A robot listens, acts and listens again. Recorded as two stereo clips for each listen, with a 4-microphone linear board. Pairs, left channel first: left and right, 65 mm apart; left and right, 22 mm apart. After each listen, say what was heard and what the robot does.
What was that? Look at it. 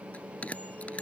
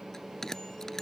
The bell: about 20° left or 160° left. Turn 20° left.
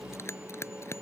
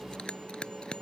So it is at 135° left. Turn 135° left.
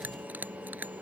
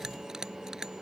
The bell is now 25° right. Turn 25° right.
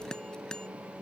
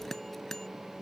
The bell is now 15° left. Turn 15° left.
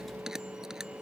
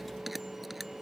Facing the bell.